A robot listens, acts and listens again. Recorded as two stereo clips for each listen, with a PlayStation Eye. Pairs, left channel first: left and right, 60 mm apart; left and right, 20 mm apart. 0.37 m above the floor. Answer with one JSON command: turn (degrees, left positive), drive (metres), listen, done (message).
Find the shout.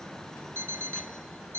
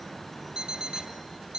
{"listen": true}
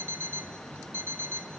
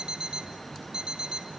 {"listen": true}
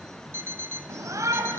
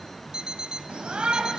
{"turn": -60}
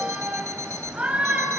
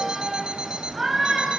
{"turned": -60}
{"turn": -20}
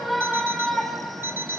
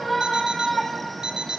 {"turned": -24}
{"done": "Facing the shout, 2 to 4 m away."}